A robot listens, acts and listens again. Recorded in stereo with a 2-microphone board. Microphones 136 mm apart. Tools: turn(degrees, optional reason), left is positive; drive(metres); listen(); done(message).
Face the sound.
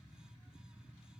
listen()
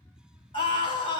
turn(degrees=40, reason="The scream: about 40° left or 140° left.")
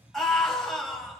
done("Facing the scream, over 4 m away.")